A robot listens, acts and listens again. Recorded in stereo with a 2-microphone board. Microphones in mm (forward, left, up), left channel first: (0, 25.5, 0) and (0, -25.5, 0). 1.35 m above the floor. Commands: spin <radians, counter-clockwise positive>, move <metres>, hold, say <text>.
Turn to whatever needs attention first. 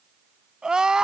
spin -0.52
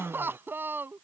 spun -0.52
spin -2.27
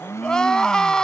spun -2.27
spin 0.26
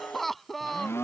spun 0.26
say Facing the crying.